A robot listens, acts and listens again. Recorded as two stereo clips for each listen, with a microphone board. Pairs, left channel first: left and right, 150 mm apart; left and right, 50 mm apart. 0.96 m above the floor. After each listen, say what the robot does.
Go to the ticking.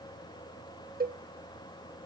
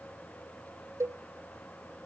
Keep listening.
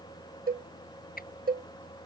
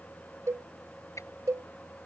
Turn 90° left.
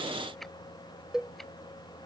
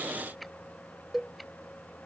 Keep listening.
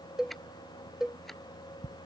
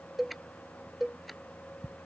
Drive 1.0 m forward.
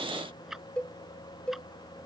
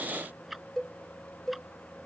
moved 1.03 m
Drive 1.0 m forward.
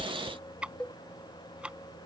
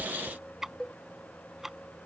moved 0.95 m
Turn 10° right.
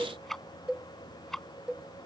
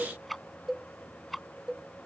Drive 1.0 m forward.
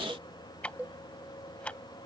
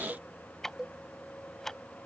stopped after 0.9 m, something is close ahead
Turn 10° left.
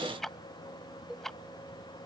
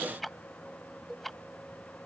Arrived at the ticking, straight ahead.